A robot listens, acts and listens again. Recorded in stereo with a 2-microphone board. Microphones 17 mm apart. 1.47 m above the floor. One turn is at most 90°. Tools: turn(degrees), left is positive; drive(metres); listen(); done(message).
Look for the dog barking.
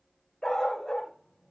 turn(degrees=65)
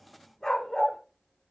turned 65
turn(degrees=25)
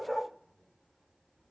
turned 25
done("Facing the dog barking.")